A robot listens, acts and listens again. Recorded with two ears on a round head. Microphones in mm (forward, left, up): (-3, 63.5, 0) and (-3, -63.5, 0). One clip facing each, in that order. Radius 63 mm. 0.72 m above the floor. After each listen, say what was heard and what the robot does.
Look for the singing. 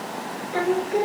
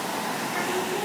The singing: about 60° left or 120° left. Turn 60° left.
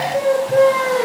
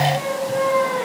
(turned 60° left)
So it is at 55° left. Turn 55° left.
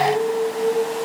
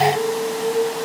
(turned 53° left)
The singing is now 10° left. Turn 10° left.
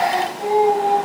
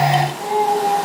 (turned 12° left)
Found it: singing, straight ahead.